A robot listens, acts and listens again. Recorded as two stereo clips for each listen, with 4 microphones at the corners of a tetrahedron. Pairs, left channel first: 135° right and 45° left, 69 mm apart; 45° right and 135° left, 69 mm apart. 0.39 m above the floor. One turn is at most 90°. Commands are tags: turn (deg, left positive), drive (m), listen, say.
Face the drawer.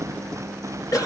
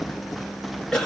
<listen/>
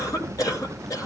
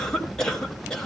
<listen/>
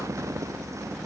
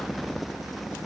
<say>I can't make out a drawer, only a cough.</say>